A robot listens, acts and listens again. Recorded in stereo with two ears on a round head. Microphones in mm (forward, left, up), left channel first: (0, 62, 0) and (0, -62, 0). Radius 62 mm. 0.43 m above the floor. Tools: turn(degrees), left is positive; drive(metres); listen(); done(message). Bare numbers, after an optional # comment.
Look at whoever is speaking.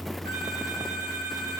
listen()
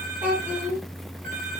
turn(-30)
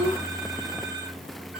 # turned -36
# So it is at 130° right.
turn(-130)
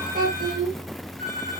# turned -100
# The child speaking is now 30° right.
turn(-30)
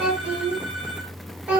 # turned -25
done("Facing the child speaking.")